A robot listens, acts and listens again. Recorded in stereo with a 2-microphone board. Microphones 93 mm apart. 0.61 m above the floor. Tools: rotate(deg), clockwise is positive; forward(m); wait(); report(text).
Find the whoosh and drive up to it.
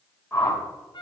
rotate(-20)
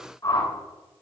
rotate(-140)
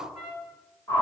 rotate(-30)
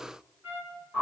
forward(1.0)
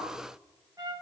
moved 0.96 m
wait()
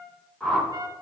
forward(1.0)
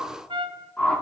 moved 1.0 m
rotate(-15)
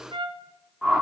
forward(1.0)
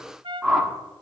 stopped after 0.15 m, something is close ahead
report("Arrived at the whoosh, straight ahead.")